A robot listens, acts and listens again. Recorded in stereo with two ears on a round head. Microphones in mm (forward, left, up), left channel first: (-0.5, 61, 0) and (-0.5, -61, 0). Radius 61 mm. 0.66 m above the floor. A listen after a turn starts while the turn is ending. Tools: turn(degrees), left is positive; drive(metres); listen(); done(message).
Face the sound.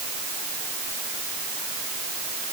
listen()
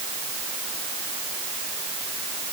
listen()
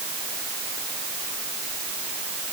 done("I can't make out anything to turn to.")